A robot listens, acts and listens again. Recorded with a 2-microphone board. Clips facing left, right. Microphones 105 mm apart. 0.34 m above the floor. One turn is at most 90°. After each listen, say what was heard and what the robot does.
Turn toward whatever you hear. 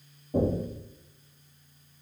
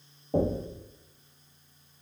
The knocking: about 65° right or 115° right. Turn 65° right.
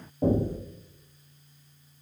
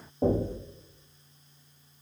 So it is at 25° right. Turn 25° right.
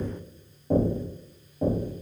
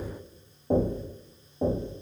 The knocking is now 20° right. Turn 20° right.
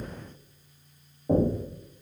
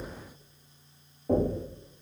Facing the knocking.